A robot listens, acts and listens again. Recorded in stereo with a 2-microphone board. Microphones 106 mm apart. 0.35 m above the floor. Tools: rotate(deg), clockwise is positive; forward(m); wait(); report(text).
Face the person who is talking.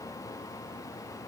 wait()
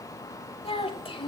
rotate(-60)
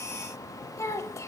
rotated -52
rotate(-35)
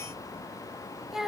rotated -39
report("Found it: a child speaking, straight ahead.")